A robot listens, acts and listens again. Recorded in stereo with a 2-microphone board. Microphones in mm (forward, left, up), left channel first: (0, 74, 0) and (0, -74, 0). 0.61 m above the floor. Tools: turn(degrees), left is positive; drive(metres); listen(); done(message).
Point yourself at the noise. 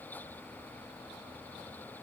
listen()
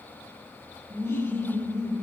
turn(degrees=15)
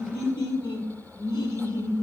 turn(degrees=145)
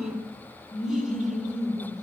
done("Facing the laughter, over 4 m away.")